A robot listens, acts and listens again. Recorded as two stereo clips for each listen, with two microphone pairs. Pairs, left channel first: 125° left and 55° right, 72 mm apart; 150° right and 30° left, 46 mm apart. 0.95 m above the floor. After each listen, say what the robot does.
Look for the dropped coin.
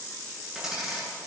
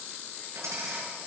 Turn 30° left.
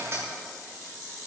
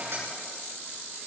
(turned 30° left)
Found it: a dropped coin, straight ahead, over 4 m away.